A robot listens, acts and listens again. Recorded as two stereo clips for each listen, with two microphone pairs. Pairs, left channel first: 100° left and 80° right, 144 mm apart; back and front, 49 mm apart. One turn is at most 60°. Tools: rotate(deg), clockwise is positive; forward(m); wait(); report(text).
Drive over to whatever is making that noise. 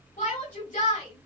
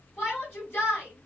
rotate(-60)
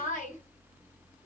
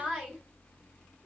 rotate(-60)
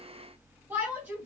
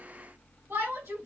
forward(1.0)
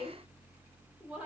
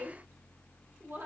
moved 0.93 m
forward(1.0)
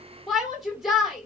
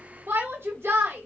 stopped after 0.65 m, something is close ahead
rotate(-10)
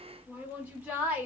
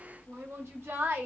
report("Arrived at the shout, straight ahead.")